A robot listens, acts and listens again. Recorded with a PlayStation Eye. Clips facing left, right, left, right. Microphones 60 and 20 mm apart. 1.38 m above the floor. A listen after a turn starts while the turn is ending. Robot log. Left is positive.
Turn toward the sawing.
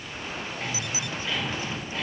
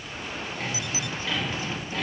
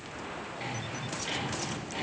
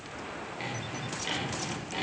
note: The sawing: about 60° right or 120° right.
cmd yaw -60
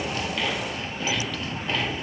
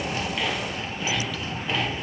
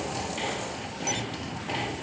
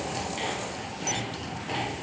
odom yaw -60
end: Found it: sawing, straight ahead, 1 to 2 m away.